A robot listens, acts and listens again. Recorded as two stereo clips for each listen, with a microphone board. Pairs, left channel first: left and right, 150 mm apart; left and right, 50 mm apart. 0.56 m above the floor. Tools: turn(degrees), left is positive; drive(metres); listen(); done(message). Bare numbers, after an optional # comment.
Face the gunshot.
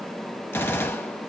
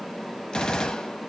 # The gunshot: about 15° left or 165° left.
turn(15)
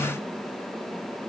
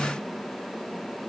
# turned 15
listen()
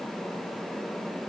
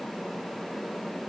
done("I heard a gunshot, but can't make it out now. It was about straight ahead or 150° left.")